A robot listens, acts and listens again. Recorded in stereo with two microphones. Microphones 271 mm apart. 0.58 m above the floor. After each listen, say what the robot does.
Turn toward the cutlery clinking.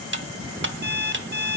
Turn 45° right.
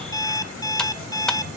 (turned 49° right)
Keep listening.
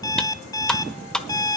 Facing the cutlery clinking.